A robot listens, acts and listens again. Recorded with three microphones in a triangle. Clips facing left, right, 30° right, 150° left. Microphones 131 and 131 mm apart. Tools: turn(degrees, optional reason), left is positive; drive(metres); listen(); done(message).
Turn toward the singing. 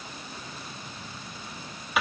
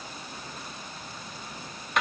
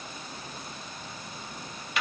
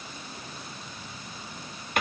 listen()
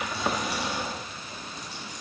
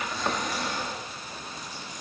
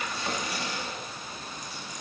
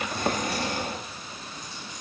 listen()
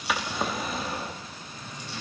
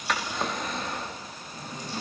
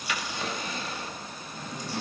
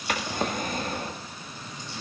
turn(degrees=-45, reason="The singing: 45° right.")
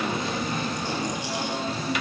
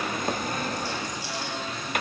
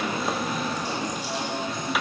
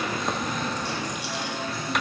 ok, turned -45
turn(degrees=40, reason="The singing is now 40° left.")
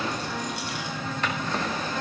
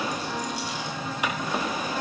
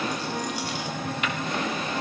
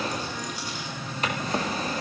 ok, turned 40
turn(degrees=-10, reason="The singing is now 10° right.")
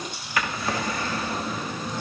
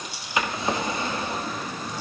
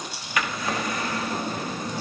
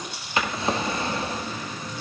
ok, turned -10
done("Found it: singing, straight ahead.")